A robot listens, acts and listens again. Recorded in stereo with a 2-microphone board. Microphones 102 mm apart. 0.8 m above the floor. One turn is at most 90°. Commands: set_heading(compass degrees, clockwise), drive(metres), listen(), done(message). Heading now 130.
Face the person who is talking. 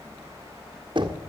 listen()
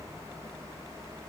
listen()
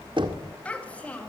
set_heading(100)
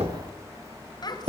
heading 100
set_heading(10)
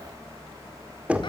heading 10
set_heading(325)
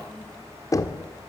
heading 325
listen()
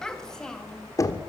done("Facing the child speaking, 2 to 4 m away.")